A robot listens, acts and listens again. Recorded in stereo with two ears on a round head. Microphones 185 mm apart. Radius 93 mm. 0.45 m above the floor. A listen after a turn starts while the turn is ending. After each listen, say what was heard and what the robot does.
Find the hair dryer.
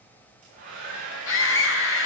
The hair dryer: about 40° right or 140° right. Turn 40° right.
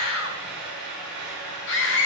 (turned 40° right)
Found it: a hair dryer, straight ahead.